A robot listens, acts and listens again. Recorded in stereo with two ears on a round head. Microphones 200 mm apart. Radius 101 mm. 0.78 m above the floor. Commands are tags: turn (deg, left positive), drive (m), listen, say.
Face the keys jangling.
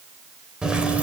<turn deg="-30"/>
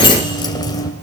<turn deg="15"/>
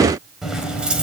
<say>Found it: keys jangling, straight ahead, 2 to 4 m away.</say>